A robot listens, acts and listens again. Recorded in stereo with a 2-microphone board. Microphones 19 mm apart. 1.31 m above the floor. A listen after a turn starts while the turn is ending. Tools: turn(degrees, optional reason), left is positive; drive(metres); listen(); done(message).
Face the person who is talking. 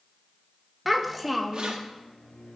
turn(degrees=30)
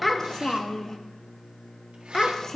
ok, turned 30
turn(degrees=150, reason="So it is at 150° left.")
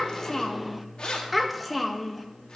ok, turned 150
done("Found it: a child speaking, straight ahead.")